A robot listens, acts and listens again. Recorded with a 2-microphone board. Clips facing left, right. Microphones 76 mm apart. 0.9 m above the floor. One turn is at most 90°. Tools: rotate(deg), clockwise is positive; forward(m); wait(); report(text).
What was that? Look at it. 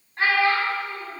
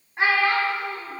rotate(30)
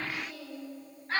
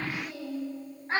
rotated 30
rotate(90)
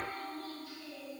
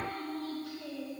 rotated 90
rotate(80)
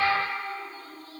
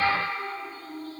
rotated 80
rotate(50)
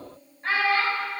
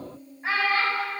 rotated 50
rotate(10)
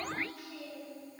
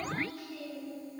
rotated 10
report("Facing the child speaking.")